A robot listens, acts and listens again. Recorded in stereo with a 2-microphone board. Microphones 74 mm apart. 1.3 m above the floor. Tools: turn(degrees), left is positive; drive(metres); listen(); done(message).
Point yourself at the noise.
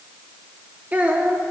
turn(degrees=-20)
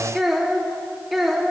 done("Found it: a child speaking, straight ahead.")